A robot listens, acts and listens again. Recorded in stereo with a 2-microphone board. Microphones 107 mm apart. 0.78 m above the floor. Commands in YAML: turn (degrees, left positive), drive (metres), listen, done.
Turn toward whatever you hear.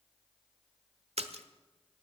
turn: -90
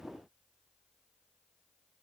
done: "I heard a splash from this way, but can't make it out now."